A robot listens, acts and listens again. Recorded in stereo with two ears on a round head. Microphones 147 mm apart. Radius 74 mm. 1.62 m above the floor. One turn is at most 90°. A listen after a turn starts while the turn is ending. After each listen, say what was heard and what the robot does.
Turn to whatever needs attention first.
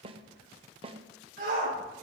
The shout: about 60° right or 120° right. Turn 60° right.
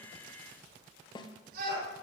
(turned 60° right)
So it is at 60° right. Turn 60° right.
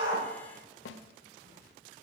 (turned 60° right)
Keep listening.
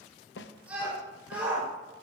The shout is now 10° right. Turn 10° right.
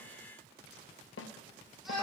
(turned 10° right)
Found it: a shout, straight ahead.